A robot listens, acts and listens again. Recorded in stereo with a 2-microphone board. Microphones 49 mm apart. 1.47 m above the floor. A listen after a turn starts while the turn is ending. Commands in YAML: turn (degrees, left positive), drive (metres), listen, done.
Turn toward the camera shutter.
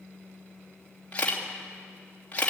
turn: 25
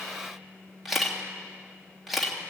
done: "Found it: a camera shutter, straight ahead, 2 to 4 m away."